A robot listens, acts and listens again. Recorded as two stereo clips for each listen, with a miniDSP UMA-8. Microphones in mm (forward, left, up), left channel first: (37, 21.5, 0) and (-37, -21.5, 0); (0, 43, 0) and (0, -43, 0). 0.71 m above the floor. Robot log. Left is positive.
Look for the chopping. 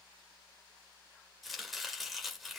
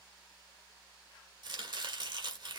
note: The chopping: 60° right.
cmd yaw -60
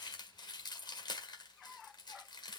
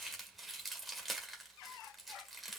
end: Found it: chopping, straight ahead.